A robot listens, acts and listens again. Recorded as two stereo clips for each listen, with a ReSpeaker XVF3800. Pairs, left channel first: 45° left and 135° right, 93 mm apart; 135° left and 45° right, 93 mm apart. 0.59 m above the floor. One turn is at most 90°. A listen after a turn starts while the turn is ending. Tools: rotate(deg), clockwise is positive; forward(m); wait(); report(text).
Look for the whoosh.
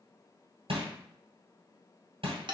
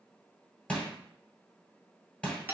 wait()
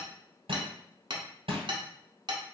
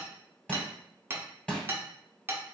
wait()
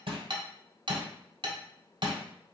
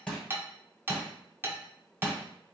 report("I can't make out a whoosh to turn to.")